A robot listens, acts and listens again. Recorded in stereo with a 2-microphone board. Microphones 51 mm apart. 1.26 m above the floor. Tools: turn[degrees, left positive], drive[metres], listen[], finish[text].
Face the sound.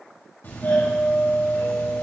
Thought: The doorbell: about 50° left or 130° left.
Action: turn[50]
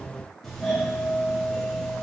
Action: finish[Facing the doorbell, 2 to 4 m away.]